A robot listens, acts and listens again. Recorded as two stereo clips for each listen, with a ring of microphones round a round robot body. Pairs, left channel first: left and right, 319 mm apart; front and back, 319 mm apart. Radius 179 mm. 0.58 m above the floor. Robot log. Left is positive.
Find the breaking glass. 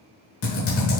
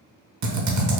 cmd idle
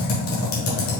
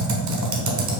cmd idle
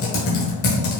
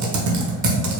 end: I can't make out breaking glass to turn to.